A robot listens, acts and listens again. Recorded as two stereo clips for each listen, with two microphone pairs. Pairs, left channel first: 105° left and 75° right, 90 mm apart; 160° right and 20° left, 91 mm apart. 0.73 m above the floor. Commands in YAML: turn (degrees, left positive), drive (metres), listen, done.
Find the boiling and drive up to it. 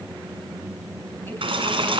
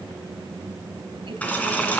turn: -85
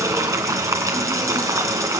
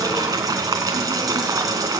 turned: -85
turn: -25
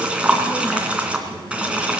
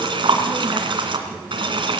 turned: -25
drive: 1.0
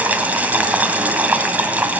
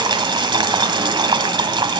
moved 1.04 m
drive: 1.0
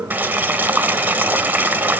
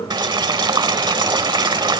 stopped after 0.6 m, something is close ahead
turn: -10
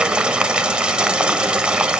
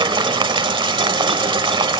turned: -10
done: "Arrived at the boiling, straight ahead."